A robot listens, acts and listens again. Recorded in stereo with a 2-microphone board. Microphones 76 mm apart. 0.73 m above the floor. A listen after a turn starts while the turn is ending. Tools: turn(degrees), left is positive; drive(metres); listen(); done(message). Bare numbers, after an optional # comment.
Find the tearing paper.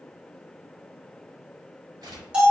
# The tearing paper: about 55° right or 125° right.
turn(-55)
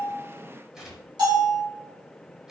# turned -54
done("Facing the tearing paper, 1 to 2 m away.")